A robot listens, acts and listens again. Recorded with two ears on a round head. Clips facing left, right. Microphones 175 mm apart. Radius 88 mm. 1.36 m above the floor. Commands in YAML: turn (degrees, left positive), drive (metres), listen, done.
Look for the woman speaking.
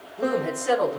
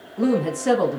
turn: -65
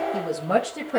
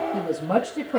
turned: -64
turn: 15
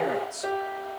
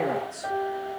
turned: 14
turn: 10
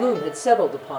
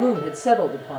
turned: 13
turn: 10
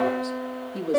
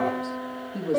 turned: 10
done: "Found it: a woman speaking, straight ahead."